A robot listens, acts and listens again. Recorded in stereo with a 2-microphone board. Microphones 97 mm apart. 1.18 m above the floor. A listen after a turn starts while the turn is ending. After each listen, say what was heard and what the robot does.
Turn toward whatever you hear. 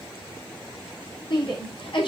The shout: about 60° left or 120° left. Turn 60° left.
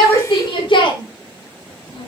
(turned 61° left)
So it is at 60° left. Turn 60° left.
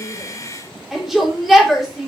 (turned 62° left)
Facing the shout.